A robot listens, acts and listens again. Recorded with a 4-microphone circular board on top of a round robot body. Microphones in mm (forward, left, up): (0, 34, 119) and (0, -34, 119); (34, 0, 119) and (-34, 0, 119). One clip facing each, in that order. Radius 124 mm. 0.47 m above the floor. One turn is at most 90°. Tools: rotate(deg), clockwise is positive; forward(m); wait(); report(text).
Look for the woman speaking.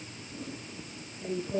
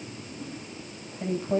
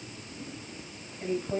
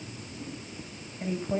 rotate(90)
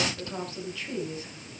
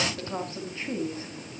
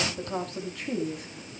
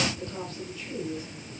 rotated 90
rotate(30)
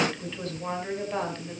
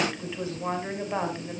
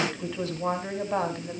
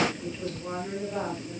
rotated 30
rotate(15)
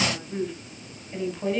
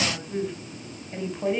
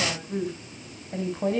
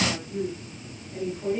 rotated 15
rotate(10)
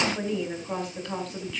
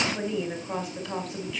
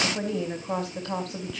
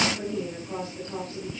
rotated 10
report("Found it: a woman speaking, straight ahead.")